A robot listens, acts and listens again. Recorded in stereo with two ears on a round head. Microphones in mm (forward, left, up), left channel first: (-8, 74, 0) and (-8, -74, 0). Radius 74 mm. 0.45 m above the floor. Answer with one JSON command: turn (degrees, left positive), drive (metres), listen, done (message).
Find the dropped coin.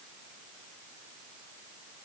{"listen": true}
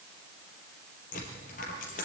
{"turn": 50}
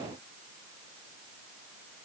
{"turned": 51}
{"listen": true}
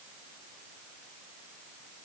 {"done": "I heard a dropped coin, but can't make it out now. It was about straight ahead or 75° left."}